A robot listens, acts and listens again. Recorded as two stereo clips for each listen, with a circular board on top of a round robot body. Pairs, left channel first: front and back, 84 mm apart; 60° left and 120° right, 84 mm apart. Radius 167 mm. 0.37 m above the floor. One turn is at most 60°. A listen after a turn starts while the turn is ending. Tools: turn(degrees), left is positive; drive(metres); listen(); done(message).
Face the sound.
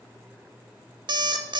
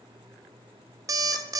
turn(degrees=-60)
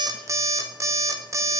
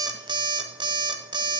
turn(degrees=-60)
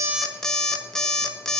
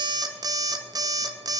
turn(degrees=-60)
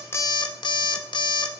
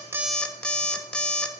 turn(degrees=-20)
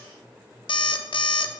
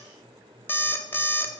done("Found it: an alarm clock, straight ahead, under 1 m away.")